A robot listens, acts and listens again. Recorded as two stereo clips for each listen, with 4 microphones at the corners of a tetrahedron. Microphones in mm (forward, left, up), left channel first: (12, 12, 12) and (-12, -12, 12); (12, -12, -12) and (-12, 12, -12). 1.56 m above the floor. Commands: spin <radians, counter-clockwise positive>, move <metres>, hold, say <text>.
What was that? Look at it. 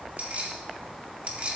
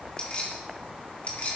spin -1.48
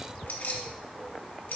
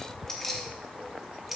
spin 0.87
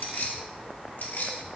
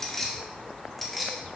spin 0.79
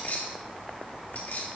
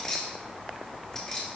spin 0.35
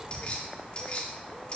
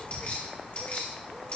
say Found it: keys jangling, straight ahead.